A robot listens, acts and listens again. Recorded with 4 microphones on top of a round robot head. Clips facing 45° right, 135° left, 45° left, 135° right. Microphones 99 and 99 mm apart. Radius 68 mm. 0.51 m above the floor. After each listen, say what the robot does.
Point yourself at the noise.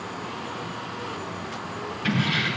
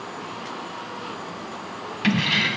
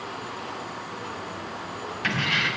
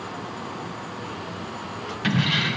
Turn 145° left.
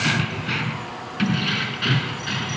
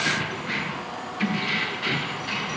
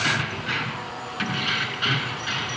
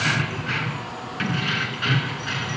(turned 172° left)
Turn 30° right.
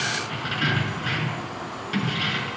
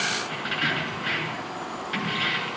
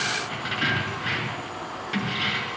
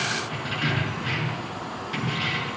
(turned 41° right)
Turn 10° left.
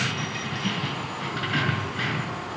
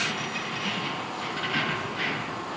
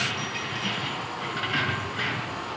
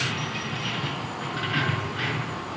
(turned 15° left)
Found it: keys jangling, straight ahead, over 4 m away.